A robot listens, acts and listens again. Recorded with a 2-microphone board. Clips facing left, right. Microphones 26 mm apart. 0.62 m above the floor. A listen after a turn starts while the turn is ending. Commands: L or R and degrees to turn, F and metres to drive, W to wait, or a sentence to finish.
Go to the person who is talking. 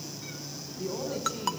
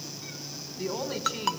R60
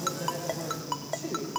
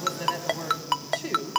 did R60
R60
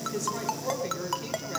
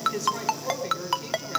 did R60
F1.0
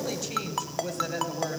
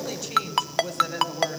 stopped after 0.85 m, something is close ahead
Something is in my way. I am facing the woman speaking but have not reached it.